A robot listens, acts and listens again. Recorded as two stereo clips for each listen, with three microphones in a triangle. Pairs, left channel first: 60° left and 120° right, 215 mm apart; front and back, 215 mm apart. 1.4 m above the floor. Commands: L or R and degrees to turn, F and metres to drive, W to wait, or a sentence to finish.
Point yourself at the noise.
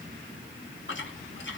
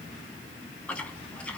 L85
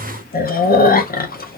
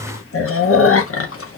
L10
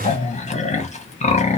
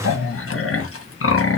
Found it: chewing, straight ahead, under 1 m away.